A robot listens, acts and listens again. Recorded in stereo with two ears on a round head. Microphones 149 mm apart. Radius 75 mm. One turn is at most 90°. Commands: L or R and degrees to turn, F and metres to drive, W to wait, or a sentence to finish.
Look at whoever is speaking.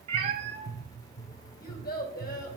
L60
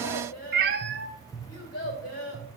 L55
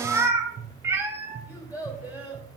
R10
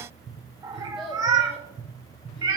W
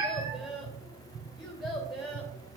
Facing the child speaking.